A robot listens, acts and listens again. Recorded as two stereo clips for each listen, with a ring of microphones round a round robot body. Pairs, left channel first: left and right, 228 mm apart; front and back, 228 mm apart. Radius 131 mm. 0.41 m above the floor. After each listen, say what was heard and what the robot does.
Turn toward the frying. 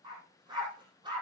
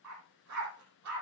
Keep listening.
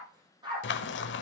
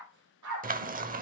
The frying: 130° left. Turn 130° left.
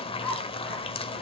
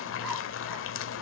The frying is now 25° left. Turn 25° left.
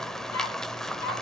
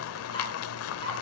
Facing the frying.